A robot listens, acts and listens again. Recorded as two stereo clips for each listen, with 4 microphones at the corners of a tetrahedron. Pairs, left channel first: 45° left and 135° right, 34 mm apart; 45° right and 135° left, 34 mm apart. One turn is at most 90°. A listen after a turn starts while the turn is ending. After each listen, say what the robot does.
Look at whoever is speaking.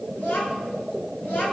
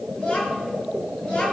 Turn 15° left.
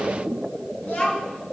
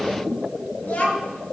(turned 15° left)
Facing the child speaking, over 4 m away.